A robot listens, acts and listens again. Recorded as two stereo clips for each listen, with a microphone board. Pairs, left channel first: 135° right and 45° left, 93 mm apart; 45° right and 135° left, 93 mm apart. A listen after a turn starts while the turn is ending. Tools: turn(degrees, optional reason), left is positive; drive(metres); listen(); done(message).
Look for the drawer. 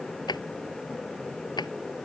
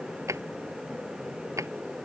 turn(degrees=-170, reason="The drawer: 170° right.")
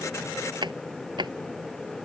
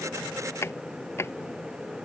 turn(degrees=15, reason="The drawer is now 15° left.")
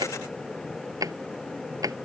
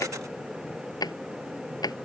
done("Facing the drawer.")